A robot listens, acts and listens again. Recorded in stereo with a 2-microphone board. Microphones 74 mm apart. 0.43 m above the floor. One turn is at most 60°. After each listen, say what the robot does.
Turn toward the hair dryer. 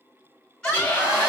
Turn 25° right.
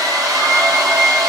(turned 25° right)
Turn 60° right.
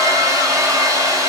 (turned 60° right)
Turn 60° right.
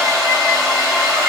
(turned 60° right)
Found it: a hair dryer, straight ahead.